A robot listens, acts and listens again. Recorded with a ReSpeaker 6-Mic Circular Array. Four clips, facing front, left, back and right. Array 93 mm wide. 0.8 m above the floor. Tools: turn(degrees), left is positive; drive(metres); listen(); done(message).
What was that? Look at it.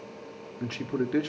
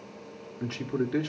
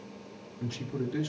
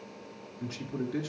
turn(degrees=25)
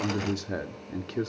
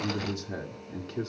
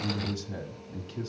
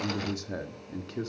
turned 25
done("Facing the man speaking, 1 to 2 m away.")